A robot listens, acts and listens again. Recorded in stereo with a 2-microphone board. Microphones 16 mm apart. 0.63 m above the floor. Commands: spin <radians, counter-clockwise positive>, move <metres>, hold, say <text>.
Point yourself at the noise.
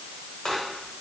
spin 0.79
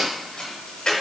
spin 1.48
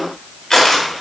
spin 0.61
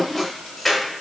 spin 0.26
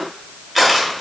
say Facing the crushing.